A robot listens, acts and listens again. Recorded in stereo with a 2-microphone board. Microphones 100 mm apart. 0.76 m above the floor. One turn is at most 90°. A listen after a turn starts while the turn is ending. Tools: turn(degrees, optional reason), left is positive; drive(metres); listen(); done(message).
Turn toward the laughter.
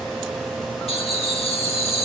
turn(degrees=90)
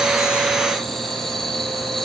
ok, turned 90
done("Facing the laughter.")